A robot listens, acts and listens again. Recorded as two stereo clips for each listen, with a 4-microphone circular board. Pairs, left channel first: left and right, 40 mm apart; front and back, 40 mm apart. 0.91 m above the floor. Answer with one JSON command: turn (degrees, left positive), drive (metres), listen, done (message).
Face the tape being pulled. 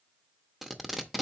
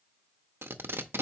{"turn": -175}
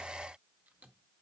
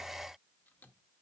{"listen": true}
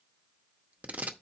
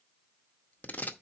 {"turn": -40}
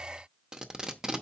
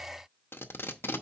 {"turn": -15}
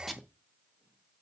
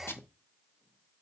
{"done": "Facing the tape being pulled."}